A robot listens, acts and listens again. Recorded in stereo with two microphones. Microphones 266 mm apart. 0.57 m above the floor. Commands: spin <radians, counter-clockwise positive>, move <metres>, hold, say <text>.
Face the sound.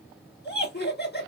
spin 0.70
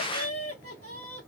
spin 1.66
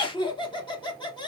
spin 0.35
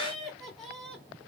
say Found it: laughter, straight ahead.